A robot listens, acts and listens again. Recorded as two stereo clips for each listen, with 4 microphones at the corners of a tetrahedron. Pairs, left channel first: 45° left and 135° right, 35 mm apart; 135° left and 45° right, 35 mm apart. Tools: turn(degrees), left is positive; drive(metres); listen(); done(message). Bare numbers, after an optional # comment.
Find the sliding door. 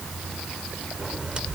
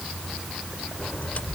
# The sliding door: 170° left.
turn(170)
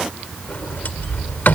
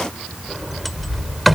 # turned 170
# The sliding door is now 45° left.
turn(45)
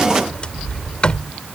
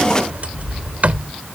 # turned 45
# The sliding door is now 10° right.
turn(-10)
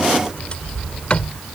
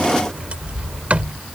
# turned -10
done("Found it: a sliding door, straight ahead.")